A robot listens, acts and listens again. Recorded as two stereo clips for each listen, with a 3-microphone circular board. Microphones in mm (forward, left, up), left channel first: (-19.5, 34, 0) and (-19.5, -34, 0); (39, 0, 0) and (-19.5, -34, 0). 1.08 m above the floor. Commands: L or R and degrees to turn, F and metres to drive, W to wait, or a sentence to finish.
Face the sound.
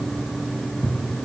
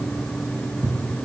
R175
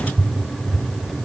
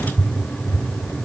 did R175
Found it: a cupboard door, straight ahead.